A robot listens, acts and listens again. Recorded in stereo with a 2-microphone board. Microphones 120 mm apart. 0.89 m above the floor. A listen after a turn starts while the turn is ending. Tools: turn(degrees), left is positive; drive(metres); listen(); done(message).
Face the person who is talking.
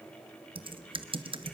listen()
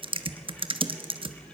listen()
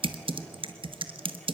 done("I can't make out anyone speaking, only typing on a keyboard.")